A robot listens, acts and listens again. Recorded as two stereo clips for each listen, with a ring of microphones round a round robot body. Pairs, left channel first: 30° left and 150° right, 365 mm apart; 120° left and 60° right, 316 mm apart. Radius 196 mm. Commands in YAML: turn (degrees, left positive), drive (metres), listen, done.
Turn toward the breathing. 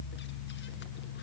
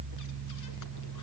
listen: true
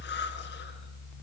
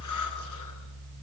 listen: true
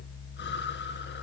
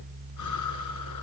done: "I can't make out breathing to turn to."